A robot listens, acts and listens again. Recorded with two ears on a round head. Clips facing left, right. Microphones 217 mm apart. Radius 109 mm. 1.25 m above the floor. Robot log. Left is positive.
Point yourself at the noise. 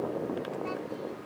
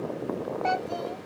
cmd yaw -90
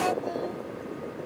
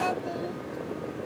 cmd idle
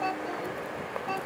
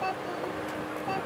end: Facing the child speaking.